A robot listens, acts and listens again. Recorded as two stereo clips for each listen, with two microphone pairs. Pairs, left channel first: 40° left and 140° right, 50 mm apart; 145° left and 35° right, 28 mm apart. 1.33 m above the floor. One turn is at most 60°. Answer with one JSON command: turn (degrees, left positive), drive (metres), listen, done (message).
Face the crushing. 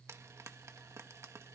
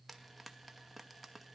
{"listen": true}
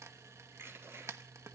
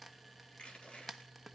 {"turn": -60}
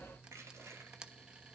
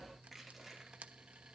{"turn": -60}
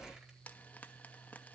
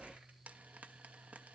{"turn": -60}
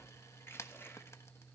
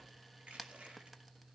{"done": "Facing the crushing."}